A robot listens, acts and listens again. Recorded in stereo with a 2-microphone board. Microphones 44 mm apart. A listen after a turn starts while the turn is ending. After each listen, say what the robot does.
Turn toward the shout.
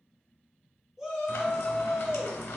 Turn 30° right.
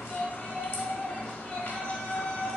Turn 25° left.
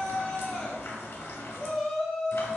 Found it: a shout, straight ahead.